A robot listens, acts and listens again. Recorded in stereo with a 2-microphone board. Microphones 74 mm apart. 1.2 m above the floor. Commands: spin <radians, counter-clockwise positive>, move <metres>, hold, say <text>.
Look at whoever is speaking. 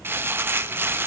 hold
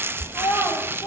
spin 1.05
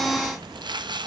hold
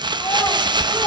hold
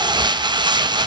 say I heard a child speaking, but can't make it out now. It was about straight ahead or 60° left.